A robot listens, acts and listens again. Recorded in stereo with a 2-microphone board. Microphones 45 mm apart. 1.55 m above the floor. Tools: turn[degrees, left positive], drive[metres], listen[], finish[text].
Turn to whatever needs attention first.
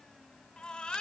Thought: The baby crying: about 20° left or 160° left.
Action: turn[20]
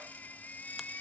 Thought: So it is at 140° left.
Action: turn[140]
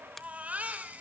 Thought: The baby crying is now 35° right.
Action: turn[-35]
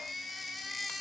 Action: finish[Found it: a baby crying, straight ahead, 2 to 4 m away.]